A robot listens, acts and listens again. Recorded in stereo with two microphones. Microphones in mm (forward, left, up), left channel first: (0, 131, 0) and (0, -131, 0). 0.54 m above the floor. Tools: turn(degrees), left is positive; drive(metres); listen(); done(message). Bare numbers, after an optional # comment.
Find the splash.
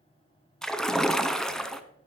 turn(30)
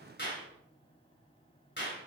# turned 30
listen()
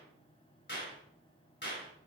done("I heard a splash, but can't make it out now. It was about 30° right or 150° left.")